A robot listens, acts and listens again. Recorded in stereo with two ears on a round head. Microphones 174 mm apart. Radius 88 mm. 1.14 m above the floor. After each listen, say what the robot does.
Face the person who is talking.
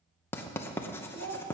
Turn 60° right.
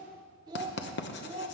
Turn 35° right.
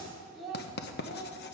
Found it: a child speaking, straight ahead, 2 to 4 m away.